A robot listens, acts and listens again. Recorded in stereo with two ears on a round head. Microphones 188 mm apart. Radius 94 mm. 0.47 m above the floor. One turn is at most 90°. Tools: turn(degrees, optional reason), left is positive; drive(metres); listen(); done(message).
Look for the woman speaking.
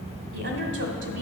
turn(degrees=-65, reason="The woman speaking: about 65° right or 115° right.")
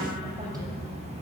listen()
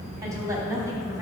turn(degrees=-15, reason="So it is at 15° right.")
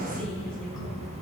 listen()
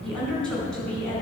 done("Found it: a woman speaking, straight ahead, over 4 m away.")